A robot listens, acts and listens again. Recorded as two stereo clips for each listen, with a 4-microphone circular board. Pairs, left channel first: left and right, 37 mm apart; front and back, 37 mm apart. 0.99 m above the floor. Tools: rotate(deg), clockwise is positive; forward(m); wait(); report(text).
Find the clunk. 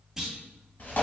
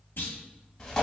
rotate(10)
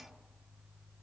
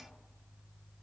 report("I heard a clunk from this way, but can't make it out now.")